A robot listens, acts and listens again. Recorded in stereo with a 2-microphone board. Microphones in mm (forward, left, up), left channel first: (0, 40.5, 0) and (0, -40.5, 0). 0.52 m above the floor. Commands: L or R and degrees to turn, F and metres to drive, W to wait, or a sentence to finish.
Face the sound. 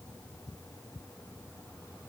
W
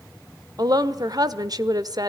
R50
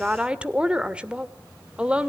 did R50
R15
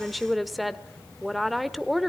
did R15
Found it: a woman speaking, straight ahead, 1 to 2 m away.